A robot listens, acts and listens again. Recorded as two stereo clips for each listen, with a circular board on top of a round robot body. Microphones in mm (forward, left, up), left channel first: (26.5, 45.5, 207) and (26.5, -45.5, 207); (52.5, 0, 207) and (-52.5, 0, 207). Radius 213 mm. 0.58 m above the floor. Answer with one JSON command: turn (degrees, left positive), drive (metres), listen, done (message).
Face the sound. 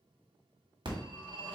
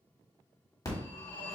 {"turn": -55}
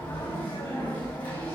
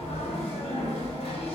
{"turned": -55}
{"turn": 20}
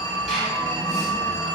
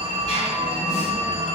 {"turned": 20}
{"done": "Found it: a phone ringing, straight ahead."}